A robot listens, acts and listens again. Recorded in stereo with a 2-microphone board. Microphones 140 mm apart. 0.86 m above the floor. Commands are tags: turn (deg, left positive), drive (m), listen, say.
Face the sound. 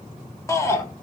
<turn deg="20"/>
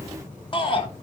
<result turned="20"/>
<turn deg="140"/>
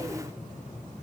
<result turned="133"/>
<listen/>
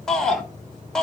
<say>Facing the shout, 1 to 2 m away.</say>